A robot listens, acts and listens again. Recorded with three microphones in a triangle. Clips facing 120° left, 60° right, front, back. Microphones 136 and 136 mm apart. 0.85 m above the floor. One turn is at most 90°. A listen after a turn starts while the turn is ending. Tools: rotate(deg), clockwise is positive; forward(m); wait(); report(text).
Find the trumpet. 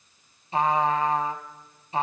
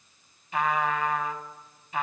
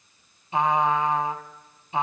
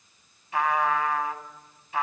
rotate(-65)
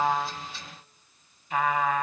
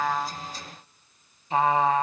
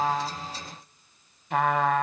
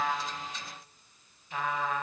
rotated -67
report("Facing the trumpet, 1 to 2 m away.")